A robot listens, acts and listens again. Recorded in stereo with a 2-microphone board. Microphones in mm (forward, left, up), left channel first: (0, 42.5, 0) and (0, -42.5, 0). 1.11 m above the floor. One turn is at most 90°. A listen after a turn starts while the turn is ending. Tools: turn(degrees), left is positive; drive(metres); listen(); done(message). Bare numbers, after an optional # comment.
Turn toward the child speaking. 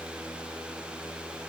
listen()
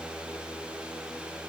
listen()
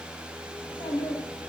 # The child speaking: about 75° left or 105° left.
turn(75)
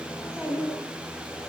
done("Facing the child speaking.")